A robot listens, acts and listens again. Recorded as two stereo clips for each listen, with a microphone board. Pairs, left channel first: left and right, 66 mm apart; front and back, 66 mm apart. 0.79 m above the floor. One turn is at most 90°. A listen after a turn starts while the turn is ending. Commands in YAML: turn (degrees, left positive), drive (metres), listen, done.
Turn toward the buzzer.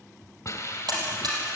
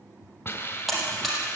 turn: -90
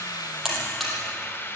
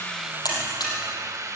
done: "Found it: a buzzer, straight ahead, over 4 m away."